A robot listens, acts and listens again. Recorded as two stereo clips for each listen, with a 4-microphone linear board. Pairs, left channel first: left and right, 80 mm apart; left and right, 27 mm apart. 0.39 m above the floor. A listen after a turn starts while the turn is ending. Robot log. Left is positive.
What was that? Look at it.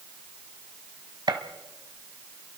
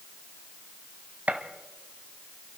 note: The gunshot: about 65° right or 115° right.
cmd yaw -65
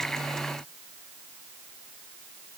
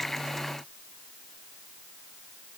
cmd idle
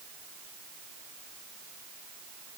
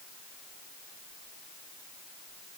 end: I heard a gunshot, but can't make it out now. It was about straight ahead or 50° right.